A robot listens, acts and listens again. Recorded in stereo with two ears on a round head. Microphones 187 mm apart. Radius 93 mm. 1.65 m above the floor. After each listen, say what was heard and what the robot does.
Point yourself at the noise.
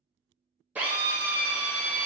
Turn 30° right.
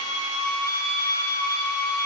So it is at 20° left. Turn 20° left.
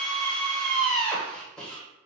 Found it: a drill, straight ahead, under 1 m away.